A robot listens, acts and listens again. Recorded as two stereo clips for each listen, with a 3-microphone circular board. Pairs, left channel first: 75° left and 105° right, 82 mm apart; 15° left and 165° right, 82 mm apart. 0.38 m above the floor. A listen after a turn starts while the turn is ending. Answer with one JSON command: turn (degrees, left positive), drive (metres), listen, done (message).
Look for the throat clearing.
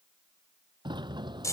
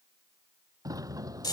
{"listen": true}
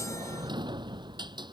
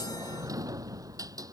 {"listen": true}
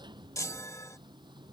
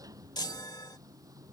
{"done": "I can't make out throat clearing, only a sliding door and a chime."}